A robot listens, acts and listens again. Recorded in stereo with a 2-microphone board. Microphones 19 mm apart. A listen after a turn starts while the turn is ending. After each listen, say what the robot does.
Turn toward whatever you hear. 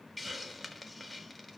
Turn 30° left.
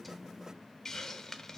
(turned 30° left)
Turn 140° left.
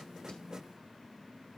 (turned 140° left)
Keep listening.
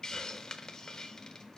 Turn 35° left.
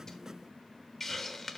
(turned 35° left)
Turn 10° left.
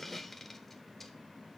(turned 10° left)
Facing the hiss.